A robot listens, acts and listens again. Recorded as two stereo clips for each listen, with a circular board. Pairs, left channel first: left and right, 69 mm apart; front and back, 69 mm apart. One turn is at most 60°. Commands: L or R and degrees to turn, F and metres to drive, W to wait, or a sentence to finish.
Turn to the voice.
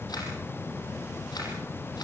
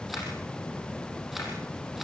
W
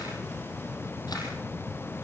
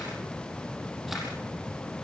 W
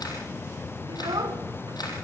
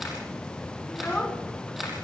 R60
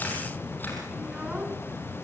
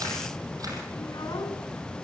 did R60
R15
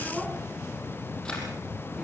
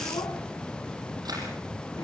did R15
W
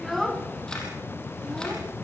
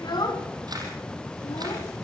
Found it: a child speaking, straight ahead, 2 to 4 m away.